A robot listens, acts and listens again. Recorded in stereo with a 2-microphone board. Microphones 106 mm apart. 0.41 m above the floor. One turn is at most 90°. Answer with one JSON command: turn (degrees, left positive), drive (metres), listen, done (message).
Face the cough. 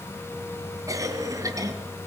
{"turn": -30}
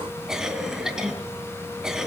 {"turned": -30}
{"done": "Facing the cough."}